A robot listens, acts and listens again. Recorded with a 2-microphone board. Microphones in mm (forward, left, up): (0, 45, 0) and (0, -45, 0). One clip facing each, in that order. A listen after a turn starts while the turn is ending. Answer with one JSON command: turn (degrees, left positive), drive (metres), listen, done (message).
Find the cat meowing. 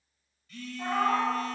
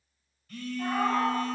{"turn": 30}
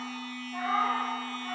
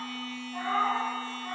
{"turn": -30}
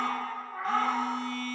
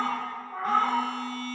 {"turn": -135}
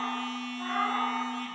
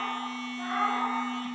{"turn": -30}
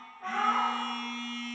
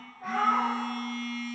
{"done": "Found it: a cat meowing, straight ahead."}